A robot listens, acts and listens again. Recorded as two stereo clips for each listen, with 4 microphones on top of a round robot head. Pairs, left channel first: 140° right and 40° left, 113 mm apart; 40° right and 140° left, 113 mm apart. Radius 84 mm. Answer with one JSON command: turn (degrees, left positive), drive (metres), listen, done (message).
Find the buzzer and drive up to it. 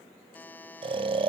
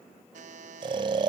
{"turn": 145}
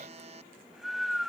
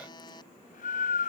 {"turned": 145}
{"turn": 10}
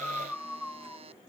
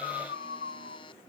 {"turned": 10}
{"drive": 1.0}
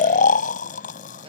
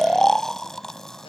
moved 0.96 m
{"listen": true}
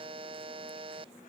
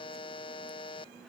{"drive": 1.0}
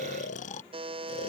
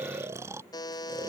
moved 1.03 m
{"turn": 10}
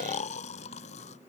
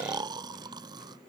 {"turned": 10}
{"listen": true}
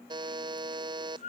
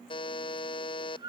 {"drive": 1.0}
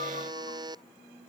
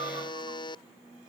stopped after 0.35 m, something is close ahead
{"done": "I am next to the buzzer."}